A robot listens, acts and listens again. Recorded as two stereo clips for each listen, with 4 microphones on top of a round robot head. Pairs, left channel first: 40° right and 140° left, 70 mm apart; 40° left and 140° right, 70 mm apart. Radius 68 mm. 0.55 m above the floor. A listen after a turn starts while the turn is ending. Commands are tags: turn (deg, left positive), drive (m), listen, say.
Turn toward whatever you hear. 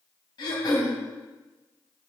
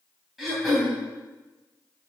<turn deg="-50"/>
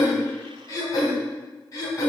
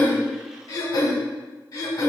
<say>Found it: throat clearing, straight ahead, 2 to 4 m away.</say>